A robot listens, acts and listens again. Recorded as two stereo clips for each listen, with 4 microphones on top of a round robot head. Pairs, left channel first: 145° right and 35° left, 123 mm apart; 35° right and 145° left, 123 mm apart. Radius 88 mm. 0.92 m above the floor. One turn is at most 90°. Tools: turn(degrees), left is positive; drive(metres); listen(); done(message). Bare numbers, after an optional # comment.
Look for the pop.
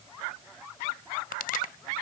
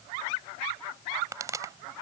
# The pop: 150° right.
turn(-90)
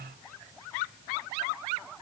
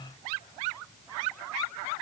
# Nothing new. It was at 60° right.
turn(-60)
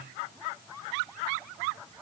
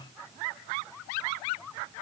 done("I heard a pop from this way, but can't make it out now.")